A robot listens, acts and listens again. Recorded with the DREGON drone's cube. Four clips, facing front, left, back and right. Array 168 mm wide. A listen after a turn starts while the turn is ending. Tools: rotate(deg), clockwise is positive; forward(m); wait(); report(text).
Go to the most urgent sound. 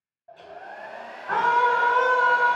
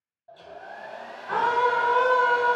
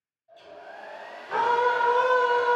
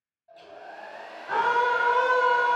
forward(1.0)
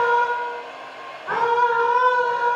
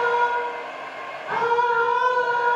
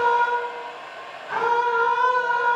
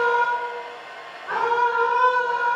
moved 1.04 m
forward(1.0)
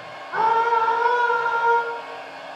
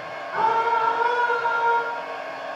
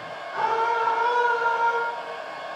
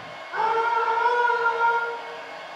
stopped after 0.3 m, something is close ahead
report("Arrived at the scream, straight ahead.")